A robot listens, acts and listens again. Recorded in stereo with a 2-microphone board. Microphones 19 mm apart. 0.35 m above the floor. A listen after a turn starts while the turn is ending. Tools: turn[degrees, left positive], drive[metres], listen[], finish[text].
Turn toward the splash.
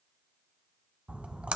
Thought: The splash: about 70° right or 110° right.
Action: turn[-70]
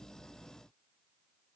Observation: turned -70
Action: listen[]
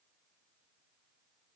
Action: finish[I heard a splash, but can't make it out now. It was about straight ahead or 40° right.]